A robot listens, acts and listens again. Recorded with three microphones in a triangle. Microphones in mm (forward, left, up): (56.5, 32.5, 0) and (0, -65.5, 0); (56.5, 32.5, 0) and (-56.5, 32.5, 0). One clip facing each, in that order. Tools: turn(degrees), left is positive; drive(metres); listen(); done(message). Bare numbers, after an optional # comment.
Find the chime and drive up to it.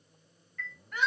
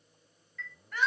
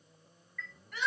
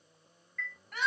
# The chime: 80° left.
turn(80)
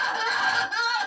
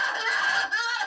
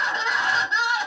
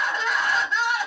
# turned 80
listen()
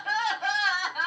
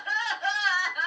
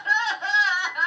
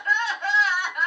listen()
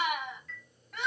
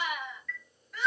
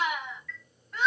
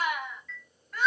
# The chime is now 15° left.
turn(15)
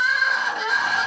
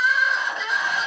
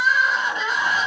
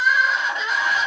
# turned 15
listen()
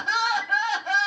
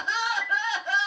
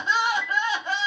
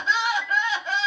drive(1.0)
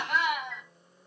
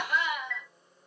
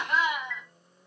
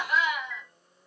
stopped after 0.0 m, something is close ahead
done("Something is in my way. I am facing the chime but have not reached it.")